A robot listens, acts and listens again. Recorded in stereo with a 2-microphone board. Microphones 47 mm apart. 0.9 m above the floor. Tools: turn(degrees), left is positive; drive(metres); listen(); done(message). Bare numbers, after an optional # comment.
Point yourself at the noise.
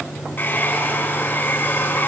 # The hair dryer: about 40° left or 140° left.
turn(40)
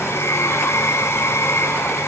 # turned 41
# So it is at 100° left.
turn(100)
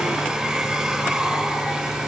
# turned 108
# The hair dryer is now 10° right.
turn(-10)
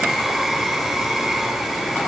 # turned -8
done("Found it: a hair dryer, straight ahead, over 4 m away.")